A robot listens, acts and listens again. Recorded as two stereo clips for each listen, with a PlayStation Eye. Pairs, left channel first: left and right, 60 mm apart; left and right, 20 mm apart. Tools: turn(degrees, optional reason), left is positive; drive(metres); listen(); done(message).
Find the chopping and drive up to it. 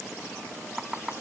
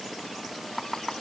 turn(degrees=-15, reason="The chopping: about 15° right or 165° right.")
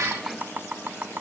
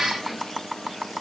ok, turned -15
turn(degrees=-150, reason="So it is at 150° right.")
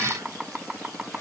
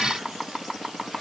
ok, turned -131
turn(degrees=-15, reason="The chopping is now 15° right.")
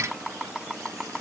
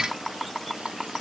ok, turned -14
drive(metres=1.0)
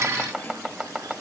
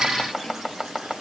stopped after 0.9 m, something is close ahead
turn(degrees=-10, reason="The chopping is now 10° right.")
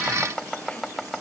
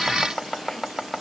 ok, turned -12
done("Arrived at the chopping, straight ahead.")